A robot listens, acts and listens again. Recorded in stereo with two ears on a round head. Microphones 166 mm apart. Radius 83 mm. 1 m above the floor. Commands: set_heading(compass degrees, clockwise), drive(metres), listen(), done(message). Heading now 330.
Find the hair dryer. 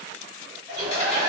set_heading(350)
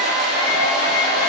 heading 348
done("Found it: a hair dryer, straight ahead.")